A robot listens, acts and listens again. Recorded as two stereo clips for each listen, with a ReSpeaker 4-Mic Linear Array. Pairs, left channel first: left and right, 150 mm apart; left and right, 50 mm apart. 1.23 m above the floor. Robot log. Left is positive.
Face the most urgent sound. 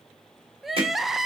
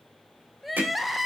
cmd yaw +30
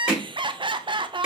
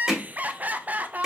note: So it is at 35° right.
cmd yaw -35
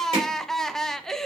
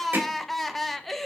end: Facing the crying.